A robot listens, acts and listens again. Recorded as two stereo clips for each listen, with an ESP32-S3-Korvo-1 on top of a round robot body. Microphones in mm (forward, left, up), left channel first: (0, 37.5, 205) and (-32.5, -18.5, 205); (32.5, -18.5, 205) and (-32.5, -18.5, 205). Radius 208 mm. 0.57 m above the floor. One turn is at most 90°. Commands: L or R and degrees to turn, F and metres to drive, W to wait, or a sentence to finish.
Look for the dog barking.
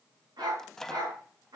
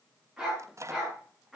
R90
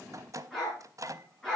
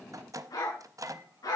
R20
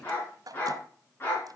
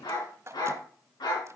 Facing the dog barking.